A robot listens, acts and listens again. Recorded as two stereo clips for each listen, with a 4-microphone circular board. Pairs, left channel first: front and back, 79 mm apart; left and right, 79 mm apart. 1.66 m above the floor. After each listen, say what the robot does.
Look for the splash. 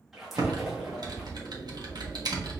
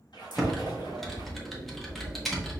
Turn 90° left.
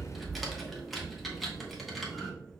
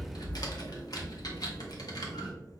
Facing where the splash came from. I can't hear it now.